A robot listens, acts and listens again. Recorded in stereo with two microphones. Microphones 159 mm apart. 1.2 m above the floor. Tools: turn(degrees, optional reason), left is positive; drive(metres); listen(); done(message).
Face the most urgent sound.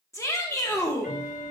turn(degrees=20, reason="The shout: about 20° left or 160° left.")
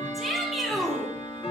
done("Found it: a shout, straight ahead, 1 to 2 m away.")